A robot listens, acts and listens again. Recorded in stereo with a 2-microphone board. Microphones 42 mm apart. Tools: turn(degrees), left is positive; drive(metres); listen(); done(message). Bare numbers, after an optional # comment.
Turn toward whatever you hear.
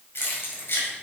# The keys jangling: about 65° left or 115° left.
turn(65)
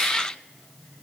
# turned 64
listen()
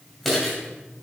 done("Facing the keys jangling.")